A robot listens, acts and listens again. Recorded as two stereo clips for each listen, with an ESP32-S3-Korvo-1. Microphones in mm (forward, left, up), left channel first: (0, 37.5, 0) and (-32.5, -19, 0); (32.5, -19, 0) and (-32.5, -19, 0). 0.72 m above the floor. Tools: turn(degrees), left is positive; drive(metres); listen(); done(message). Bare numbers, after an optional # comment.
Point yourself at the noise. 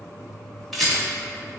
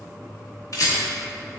# The rattle: 25° right.
turn(-25)
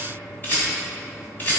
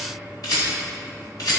done("Facing the rattle, 1 to 2 m away.")